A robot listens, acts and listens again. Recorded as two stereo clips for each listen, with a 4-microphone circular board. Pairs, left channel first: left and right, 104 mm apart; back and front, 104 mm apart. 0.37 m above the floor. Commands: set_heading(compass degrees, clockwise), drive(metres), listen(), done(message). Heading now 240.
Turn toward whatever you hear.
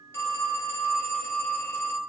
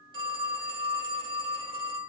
set_heading(210)
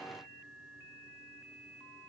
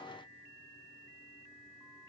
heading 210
listen()
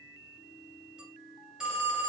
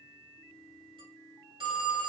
set_heading(220)
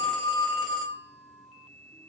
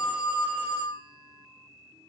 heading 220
done("Found it: a phone ringing, straight ahead, under 1 m away.")